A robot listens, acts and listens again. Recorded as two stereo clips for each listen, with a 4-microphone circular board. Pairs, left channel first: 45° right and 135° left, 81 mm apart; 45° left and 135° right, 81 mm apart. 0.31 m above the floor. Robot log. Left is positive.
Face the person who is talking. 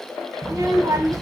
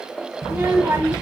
note: The child speaking: 170° left.
cmd yaw +170
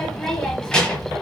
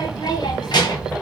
note: The child speaking is now 35° left.
cmd yaw +35
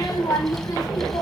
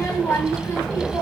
note: The child speaking is now 10° right.
cmd yaw -10
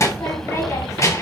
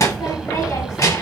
end: Facing the child speaking, 1 to 2 m away.